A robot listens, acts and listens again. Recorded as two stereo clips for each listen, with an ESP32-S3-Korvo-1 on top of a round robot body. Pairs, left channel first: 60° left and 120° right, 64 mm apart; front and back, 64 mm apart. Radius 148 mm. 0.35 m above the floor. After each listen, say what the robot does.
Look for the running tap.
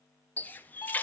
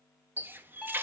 Turn 125° left.
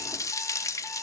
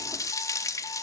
Turn 30° left.
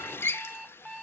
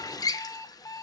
Turn 10° left.
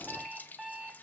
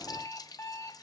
Found it: a running tap, straight ahead.